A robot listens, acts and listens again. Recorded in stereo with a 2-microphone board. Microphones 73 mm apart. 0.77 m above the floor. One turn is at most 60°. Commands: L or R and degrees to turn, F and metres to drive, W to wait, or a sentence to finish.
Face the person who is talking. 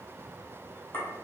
W
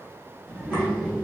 R20
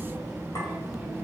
Found it: a child speaking, straight ahead.